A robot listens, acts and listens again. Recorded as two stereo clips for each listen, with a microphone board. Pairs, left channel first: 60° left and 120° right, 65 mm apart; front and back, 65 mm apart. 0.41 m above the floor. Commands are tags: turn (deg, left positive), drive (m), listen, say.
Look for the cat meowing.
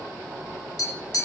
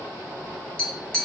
<listen/>
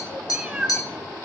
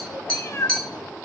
<turn deg="-45"/>
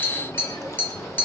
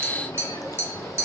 <listen/>
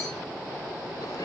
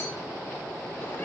<listen/>
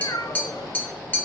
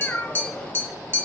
<turn deg="60"/>
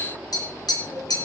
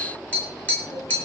<listen/>
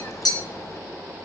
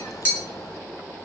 <listen/>
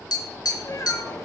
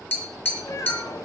<turn deg="25"/>
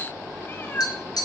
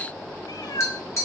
<say>Found it: a cat meowing, straight ahead, 1 to 2 m away.</say>